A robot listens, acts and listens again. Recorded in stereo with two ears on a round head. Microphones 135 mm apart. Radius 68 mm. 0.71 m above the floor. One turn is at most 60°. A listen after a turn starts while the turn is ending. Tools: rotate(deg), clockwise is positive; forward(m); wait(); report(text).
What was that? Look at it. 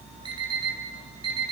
rotate(30)
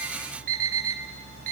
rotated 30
rotate(60)
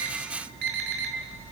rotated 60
rotate(60)
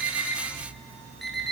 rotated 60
report("Found it: an alarm clock, straight ahead, over 4 m away.")